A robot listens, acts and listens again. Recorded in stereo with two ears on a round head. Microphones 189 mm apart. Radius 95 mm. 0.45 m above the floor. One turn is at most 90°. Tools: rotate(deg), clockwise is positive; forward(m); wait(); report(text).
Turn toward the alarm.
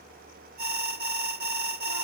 rotate(45)
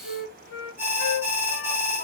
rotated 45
rotate(15)
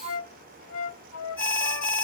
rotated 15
report("Facing the alarm.")